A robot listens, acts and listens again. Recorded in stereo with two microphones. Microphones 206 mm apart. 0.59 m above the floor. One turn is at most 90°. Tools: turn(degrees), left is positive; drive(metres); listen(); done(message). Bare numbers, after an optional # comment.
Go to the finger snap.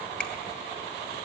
listen()
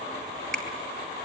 turn(30)
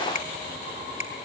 # So it is at 145° left.
turn(90)
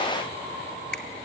# The finger snap is now 60° left.
turn(60)
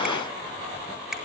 listen()
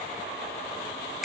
drive(1.0)
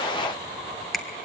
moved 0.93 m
drive(1.0)
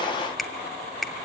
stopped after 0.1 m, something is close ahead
done("I am next to the finger snap.")